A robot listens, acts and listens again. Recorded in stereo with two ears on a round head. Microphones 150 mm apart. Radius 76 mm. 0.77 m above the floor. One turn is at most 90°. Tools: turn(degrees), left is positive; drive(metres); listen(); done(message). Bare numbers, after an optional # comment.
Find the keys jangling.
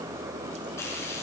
listen()
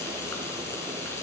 listen()
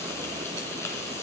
done("I can't make out keys jangling to turn to.")